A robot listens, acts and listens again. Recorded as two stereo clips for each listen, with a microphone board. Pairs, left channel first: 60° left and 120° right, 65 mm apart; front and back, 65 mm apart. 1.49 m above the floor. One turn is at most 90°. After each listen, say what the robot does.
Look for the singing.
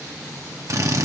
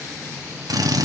Keep listening.
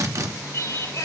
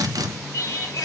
Turn 20° left.
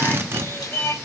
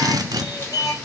Facing the singing.